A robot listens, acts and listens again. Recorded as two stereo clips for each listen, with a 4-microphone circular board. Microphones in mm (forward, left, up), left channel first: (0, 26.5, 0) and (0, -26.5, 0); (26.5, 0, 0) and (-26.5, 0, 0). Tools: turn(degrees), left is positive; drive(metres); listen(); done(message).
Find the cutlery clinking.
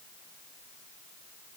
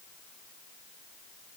listen()
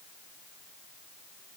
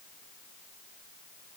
listen()
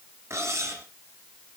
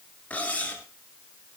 turn(degrees=-65)
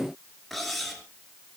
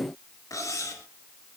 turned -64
done("Facing the cutlery clinking.")